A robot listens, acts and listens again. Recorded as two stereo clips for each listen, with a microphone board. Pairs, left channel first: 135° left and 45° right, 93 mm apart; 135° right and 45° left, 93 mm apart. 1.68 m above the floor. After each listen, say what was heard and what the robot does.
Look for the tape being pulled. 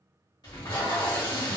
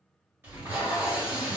The tape being pulled: 110° left. Turn 110° left.
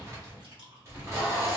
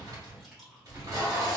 Found it: tape being pulled, straight ahead, 1 to 2 m away.